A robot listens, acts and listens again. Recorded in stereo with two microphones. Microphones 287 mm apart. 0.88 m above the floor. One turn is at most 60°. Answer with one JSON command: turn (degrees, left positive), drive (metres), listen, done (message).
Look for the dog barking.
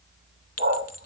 {"turn": -35}
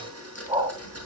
{"turn": -20}
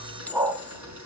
{"turn": -10}
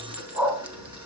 {"done": "Facing the dog barking."}